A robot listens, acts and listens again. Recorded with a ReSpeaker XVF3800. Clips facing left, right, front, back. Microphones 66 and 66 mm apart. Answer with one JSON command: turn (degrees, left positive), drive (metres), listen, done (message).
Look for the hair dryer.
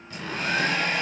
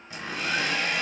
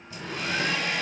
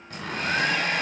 {"turn": 135}
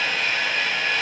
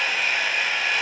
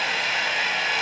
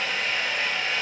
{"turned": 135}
{"turn": -10}
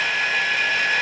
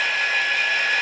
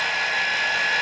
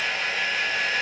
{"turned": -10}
{"done": "Found it: a hair dryer, straight ahead."}